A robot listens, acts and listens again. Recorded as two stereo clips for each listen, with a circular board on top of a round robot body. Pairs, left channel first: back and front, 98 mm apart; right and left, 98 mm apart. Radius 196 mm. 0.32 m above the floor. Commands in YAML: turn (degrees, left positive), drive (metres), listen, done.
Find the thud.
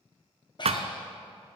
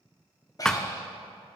done: "Found it: a thud, straight ahead."